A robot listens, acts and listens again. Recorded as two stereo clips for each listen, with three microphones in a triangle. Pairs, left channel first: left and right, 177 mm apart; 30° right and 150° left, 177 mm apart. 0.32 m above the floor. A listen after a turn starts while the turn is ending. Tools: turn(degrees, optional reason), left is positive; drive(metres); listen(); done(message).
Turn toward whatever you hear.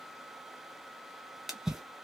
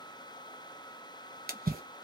turn(degrees=180, reason="The splash: straight behind.")
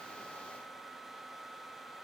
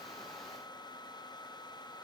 done("Facing where the splash came from. I can't hear it now.")